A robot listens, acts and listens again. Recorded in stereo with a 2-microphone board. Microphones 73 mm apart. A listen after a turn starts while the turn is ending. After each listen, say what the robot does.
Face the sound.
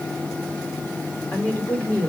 Turn 15° left.
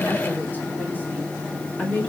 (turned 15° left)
Turn 20° left.
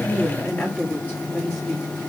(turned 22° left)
Turn 20° left.
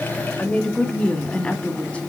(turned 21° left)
Turn 25° left.
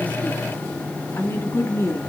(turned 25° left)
Turn 135° left.
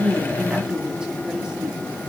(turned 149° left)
Turn 20° right.
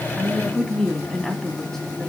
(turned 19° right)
Facing the woman speaking.